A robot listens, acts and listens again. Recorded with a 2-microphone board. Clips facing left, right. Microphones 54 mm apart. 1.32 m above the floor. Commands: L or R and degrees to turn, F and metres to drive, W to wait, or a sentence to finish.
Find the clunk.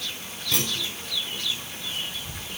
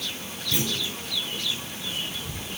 L70
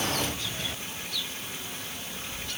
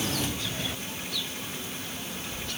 W
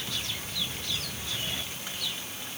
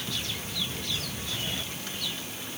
I heard a clunk, but can't make it out now. It was about straight ahead or 40° left.